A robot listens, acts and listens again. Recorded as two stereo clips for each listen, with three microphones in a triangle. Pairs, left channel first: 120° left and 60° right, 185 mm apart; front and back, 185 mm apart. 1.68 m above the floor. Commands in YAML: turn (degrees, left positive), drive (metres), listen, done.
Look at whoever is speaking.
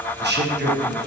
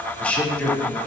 turn: -85
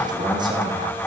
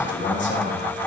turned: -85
turn: 10
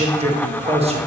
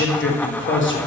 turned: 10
done: "Facing the man speaking."